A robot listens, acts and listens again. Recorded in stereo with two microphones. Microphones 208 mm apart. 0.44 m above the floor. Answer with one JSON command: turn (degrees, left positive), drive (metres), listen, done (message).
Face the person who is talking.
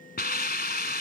{"listen": true}
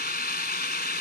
{"listen": true}
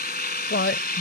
{"turn": 65}
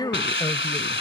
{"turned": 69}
{"turn": 20}
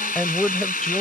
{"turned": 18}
{"done": "Found it: a woman speaking, straight ahead."}